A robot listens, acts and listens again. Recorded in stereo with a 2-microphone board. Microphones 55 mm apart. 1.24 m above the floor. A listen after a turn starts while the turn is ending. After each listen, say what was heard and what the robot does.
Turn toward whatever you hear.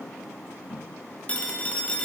The phone ringing: about 25° left or 155° left. Turn 25° left.
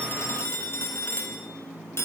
So it is at 130° left. Turn 130° left.
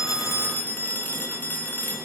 The phone ringing is now 35° left. Turn 35° left.
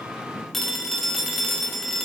Found it: a phone ringing, straight ahead, 1 to 2 m away.